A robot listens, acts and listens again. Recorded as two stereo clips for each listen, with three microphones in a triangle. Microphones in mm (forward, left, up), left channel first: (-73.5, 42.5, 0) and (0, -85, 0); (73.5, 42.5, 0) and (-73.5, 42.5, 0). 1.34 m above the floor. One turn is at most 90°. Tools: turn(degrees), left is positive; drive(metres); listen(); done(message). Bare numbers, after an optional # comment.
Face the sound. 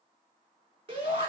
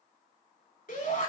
# The shout: 10° right.
turn(-10)
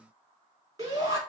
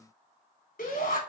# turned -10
done("Found it: a shout, straight ahead.")